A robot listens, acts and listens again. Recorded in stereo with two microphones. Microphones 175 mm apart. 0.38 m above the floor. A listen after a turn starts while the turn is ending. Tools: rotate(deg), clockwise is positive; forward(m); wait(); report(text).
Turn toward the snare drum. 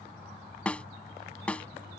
rotate(-30)
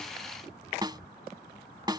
rotate(25)
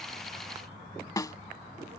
rotate(-20)
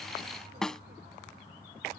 report("Facing the snare drum.")